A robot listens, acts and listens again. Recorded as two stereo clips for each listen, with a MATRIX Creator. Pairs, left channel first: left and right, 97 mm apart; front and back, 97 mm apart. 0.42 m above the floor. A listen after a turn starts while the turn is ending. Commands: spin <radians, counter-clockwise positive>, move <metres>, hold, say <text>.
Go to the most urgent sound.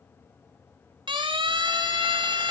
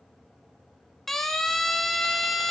spin -1.48
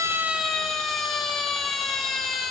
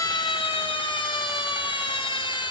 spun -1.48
move 1.0
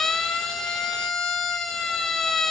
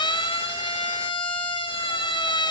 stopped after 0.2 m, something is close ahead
say Blocked. The siren is further on, straight ahead.